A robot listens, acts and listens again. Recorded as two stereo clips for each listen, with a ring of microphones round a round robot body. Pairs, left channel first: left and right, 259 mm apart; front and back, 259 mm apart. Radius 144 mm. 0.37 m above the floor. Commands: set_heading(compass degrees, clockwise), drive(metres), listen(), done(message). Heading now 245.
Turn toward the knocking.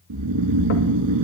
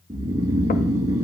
listen()
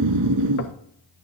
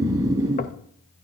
listen()
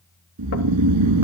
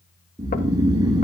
done("I can't make out knocking to turn to.")